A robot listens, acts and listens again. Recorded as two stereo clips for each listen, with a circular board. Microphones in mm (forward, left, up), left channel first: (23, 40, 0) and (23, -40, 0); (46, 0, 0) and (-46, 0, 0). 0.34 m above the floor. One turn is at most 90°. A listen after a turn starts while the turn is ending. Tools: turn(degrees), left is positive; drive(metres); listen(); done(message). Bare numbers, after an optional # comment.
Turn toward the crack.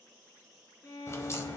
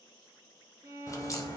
# The crack: 45° left.
turn(45)
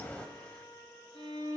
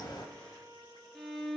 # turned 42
done("I heard a crack from this way, but can't make it out now.")